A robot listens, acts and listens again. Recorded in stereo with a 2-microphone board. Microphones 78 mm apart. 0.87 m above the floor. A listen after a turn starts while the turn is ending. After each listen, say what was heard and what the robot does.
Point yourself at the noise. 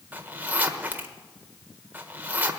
The zipper: about 20° right or 160° right. Turn 20° right.
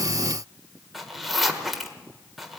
Found it: a zipper, straight ahead, 1 to 2 m away.